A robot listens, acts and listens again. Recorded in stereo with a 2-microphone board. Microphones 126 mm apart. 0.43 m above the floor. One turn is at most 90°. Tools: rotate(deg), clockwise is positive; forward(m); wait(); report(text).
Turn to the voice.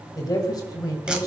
rotate(-30)
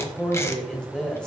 rotate(-10)
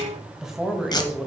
report("Facing the woman speaking, 1 to 2 m away.")